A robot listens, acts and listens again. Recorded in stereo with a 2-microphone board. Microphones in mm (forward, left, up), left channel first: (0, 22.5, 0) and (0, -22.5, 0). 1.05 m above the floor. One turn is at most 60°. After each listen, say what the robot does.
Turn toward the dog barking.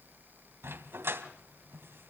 Turn 60° right.
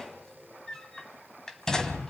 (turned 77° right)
Turn 15° left.
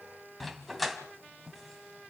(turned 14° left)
Facing the dog barking, 2 to 4 m away.